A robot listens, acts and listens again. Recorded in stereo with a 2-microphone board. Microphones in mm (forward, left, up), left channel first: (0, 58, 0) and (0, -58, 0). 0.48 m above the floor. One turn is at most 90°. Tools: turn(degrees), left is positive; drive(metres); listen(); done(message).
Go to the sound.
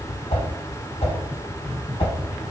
turn(degrees=55)
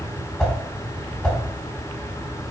drive(metres=1.0)
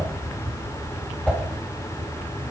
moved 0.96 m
turn(degrees=10)
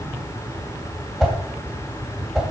drive(metres=1.0)
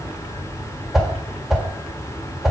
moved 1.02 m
drive(metres=1.0)
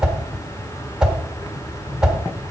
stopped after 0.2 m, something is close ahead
turn(degrees=-10)
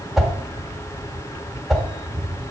done("Arrived at the whoosh, straight ahead.")